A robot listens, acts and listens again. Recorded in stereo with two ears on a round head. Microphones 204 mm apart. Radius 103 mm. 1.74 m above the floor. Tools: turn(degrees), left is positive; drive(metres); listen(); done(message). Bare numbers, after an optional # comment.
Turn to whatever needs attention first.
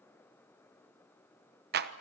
listen()
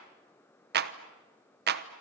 listen()
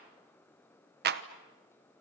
done("I can't make out anything urgent to turn to.")